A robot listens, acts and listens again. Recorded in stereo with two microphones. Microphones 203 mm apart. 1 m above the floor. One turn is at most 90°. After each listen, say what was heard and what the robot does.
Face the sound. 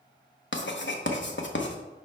The writing: about 65° left or 115° left. Turn 65° left.
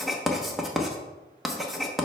Found it: writing, straight ahead.